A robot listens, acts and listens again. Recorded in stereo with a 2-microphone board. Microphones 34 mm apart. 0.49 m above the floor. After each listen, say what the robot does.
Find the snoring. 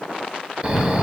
Turn 30° right.
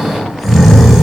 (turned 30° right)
Facing the snoring.